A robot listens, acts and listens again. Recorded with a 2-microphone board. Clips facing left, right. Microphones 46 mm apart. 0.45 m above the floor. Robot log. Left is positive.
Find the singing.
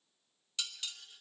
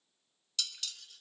cmd idle
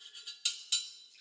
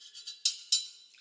cmd idle
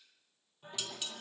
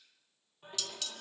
note: The singing: about 30° right or 150° right.
cmd yaw -30
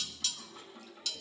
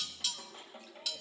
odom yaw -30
note: So it is at 120° right.
cmd yaw -120
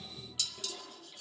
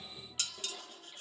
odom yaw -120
end: Found it: singing, straight ahead, over 4 m away.